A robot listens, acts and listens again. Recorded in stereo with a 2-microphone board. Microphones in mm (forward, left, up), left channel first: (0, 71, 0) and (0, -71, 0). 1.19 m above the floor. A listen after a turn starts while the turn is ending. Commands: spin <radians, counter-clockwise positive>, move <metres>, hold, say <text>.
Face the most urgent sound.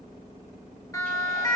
spin 0.35
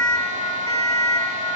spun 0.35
spin 2.36
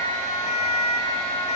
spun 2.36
spin 0.87
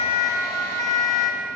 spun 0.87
spin 0.44
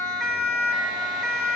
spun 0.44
say Found it: a siren, straight ahead.